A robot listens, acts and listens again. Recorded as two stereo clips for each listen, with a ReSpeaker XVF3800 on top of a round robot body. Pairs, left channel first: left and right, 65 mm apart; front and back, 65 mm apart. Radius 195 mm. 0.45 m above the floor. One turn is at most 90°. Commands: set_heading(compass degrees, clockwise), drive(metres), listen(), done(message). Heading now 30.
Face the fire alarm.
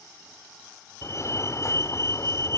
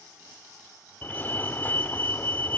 set_heading(335)
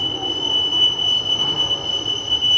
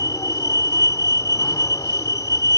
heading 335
done("Found it: a fire alarm, straight ahead.")